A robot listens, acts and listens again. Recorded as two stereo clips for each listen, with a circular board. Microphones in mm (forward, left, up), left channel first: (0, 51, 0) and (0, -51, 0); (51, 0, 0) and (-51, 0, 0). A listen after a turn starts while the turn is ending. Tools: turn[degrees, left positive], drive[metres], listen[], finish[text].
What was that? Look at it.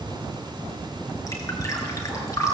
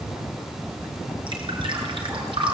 Thought: The dripping: 145° left.
Action: turn[145]
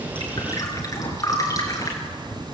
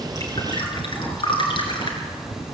Thought: The dripping is now 35° left.
Action: turn[35]
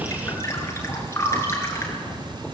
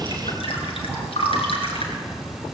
Thought: The dripping is now 25° left.
Action: turn[25]
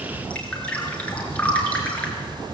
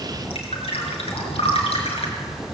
Thought: The dripping is now 15° left.
Action: turn[15]
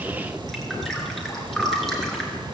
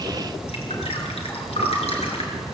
Action: finish[Found it: dripping, straight ahead, over 4 m away.]